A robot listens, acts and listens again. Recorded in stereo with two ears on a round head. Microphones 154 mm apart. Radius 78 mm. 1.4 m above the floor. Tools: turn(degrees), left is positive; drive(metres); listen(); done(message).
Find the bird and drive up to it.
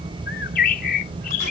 turn(degrees=55)
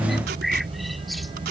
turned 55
drive(metres=1.0)
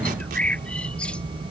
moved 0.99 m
drive(metres=1.0)
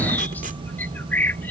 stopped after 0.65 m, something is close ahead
turn(degrees=10)
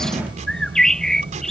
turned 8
done("Blocked. The bird is further on, straight ahead.")